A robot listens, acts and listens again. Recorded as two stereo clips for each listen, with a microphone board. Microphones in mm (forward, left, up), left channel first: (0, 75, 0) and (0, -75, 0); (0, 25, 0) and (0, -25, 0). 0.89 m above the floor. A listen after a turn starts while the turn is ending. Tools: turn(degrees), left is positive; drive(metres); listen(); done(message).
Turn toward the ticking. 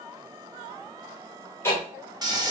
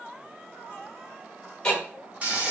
turn(degrees=15)
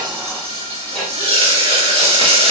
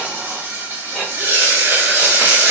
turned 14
done("Found it: ticking, straight ahead, 1 to 2 m away.")